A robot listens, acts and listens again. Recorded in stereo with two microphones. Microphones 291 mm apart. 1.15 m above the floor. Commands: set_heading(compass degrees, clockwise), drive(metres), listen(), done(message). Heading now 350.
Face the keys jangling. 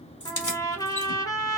set_heading(260)
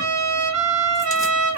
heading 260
listen()
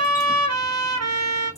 listen()
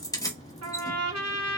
set_heading(250)
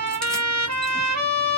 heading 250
listen()
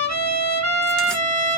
listen()
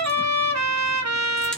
done("Facing where the keys jangling came from. I can't hear it now.")